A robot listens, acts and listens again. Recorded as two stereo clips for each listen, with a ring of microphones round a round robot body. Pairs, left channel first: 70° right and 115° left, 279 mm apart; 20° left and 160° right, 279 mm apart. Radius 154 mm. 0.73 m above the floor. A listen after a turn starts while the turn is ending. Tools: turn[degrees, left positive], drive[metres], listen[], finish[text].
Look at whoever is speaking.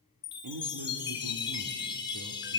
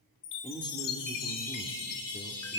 Thought: The man speaking: 95° left.
Action: turn[95]
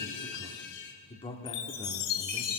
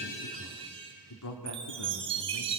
Action: finish[Facing the man speaking.]